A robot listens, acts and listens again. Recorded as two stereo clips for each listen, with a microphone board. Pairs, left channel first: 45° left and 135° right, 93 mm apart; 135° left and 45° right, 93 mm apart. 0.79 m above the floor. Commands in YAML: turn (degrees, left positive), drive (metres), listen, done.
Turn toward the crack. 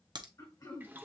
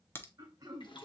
turn: -165
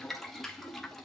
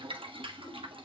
done: "I heard a crack from this way, but can't make it out now."